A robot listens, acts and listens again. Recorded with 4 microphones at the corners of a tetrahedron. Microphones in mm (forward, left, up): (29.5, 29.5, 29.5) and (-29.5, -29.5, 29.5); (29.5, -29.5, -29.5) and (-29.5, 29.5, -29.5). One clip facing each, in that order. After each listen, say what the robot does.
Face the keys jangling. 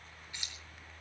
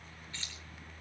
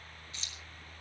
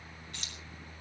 Turn 120° left.
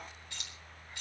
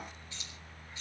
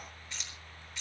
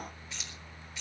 Turn 45° left.
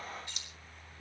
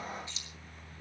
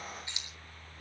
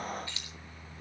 Turn 25° left.
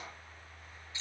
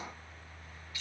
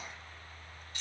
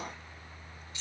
Turn 15° right.
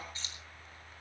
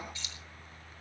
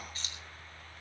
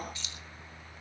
Found it: keys jangling, straight ahead, 2 to 4 m away.